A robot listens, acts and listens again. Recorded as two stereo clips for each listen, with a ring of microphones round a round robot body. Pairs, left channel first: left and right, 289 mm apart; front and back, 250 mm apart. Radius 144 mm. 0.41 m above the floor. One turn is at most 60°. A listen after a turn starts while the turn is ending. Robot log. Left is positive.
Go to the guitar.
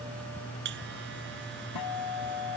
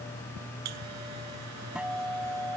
note: The guitar: 95° left.
cmd yaw +60
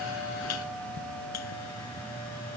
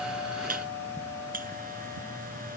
note: Nothing new. It was at 35° left.
cmd yaw +35
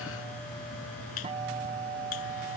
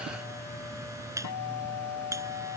note: The guitar is now 20° right.
cmd yaw -20
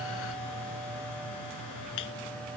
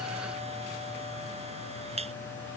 cmd idle
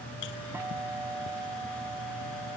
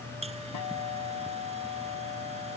cmd fwd 1.0
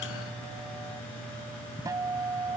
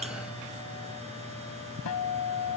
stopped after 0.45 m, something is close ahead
note: The guitar is now 10° right.
cmd yaw -10
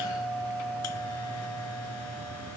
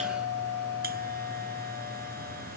end: Blocked. The guitar is further on, straight ahead.